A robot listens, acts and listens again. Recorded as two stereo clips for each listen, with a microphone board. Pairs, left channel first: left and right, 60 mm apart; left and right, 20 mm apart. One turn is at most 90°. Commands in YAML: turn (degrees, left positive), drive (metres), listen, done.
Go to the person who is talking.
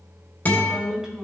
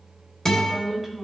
turn: -30
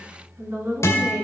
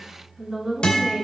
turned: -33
turn: -90
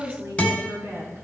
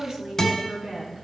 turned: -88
turn: -50
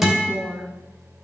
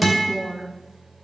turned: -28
turn: -20
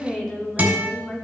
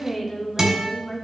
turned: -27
drive: 1.0
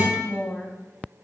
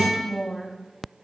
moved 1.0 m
turn: 10
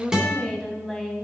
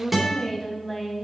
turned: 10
drive: 1.0
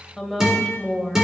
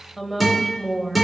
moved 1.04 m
drive: 1.0
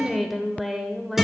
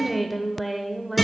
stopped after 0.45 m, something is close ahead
done: "Arrived at the woman speaking, straight ahead."